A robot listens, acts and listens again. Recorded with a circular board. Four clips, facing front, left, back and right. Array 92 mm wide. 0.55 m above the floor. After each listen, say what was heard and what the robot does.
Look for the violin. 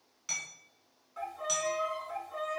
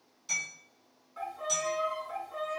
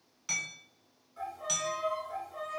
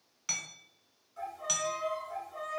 The violin: 45° left. Turn 45° left.
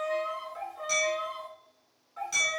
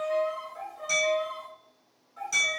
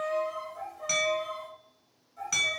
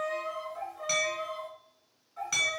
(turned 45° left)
Found it: a violin, straight ahead, 1 to 2 m away.